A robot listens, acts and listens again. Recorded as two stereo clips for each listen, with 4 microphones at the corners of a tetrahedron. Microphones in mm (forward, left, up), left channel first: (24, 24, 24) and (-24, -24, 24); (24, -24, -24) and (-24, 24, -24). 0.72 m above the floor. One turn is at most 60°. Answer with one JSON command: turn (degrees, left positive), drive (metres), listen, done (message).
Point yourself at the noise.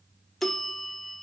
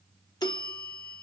{"turn": -40}
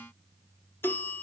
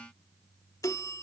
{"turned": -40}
{"turn": -10}
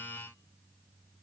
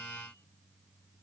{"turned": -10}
{"listen": true}
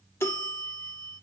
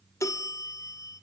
{"done": "Facing the bell."}